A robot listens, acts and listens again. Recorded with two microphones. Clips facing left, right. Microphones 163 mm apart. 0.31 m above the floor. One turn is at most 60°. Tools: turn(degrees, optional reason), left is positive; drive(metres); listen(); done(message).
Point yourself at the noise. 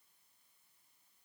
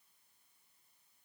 listen()
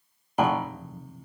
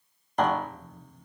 turn(degrees=30)
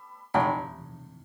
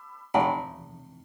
turn(degrees=-20, reason="So it is at 20° right.")
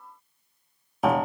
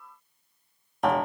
done("Facing the piano.")